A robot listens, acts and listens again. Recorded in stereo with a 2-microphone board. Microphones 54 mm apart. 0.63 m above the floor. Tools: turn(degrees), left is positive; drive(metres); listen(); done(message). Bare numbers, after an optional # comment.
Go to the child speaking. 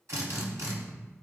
listen()
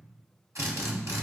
listen()
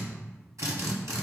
done("I can't make out a child speaking to turn to.")